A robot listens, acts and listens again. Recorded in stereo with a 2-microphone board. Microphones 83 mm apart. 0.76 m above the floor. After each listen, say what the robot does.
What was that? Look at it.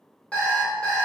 Turn 15° left.
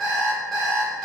Facing the alarm clock, 1 to 2 m away.